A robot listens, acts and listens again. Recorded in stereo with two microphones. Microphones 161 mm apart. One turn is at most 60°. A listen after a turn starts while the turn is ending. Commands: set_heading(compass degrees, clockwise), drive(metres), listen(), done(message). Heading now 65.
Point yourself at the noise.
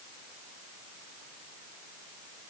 listen()
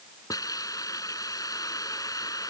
set_heading(45)
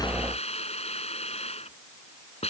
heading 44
set_heading(344)
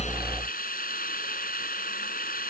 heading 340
set_heading(280)
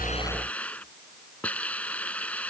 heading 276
set_heading(266)
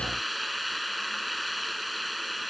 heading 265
done("Facing the hiss.")